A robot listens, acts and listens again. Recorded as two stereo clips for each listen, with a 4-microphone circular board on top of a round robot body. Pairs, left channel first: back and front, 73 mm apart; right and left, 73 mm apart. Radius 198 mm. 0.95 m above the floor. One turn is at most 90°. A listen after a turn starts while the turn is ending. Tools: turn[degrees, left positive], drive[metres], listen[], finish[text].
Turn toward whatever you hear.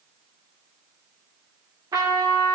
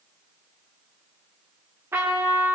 Thought: The trumpet: 35° left.
Action: turn[35]
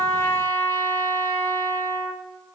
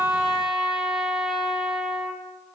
Action: finish[Found it: a trumpet, straight ahead.]